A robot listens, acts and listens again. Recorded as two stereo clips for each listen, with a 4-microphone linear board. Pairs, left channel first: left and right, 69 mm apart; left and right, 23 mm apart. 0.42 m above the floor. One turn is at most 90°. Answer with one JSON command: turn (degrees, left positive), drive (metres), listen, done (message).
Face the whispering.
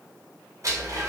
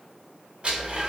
{"listen": true}
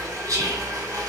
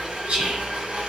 {"turn": -55}
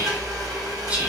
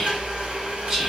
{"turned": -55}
{"turn": -30}
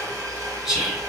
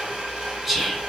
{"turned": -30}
{"turn": -10}
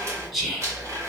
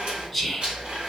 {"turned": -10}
{"done": "Facing the whispering, 1 to 2 m away."}